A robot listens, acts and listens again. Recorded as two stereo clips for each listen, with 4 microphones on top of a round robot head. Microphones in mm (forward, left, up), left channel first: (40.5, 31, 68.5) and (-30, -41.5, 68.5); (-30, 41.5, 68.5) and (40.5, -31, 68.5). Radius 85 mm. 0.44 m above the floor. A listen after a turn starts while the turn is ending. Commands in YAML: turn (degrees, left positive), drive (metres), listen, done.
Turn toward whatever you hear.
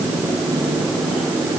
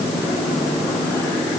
listen: true
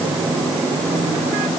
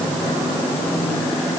listen: true
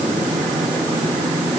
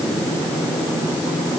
done: "I can't make out anything to turn to."